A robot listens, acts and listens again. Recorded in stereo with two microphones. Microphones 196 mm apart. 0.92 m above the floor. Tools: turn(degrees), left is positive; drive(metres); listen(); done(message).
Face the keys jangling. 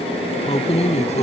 turn(degrees=35)
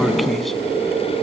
listen()
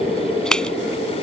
done("Facing the keys jangling.")